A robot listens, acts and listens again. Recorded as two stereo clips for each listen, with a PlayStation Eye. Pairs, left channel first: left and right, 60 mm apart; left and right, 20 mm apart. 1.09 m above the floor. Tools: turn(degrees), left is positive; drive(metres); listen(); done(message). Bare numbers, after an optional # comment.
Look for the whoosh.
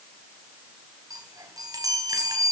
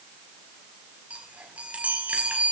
listen()
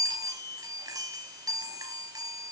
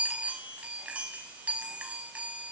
listen()
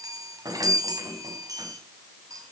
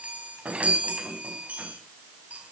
done("I can't make out a whoosh to turn to.")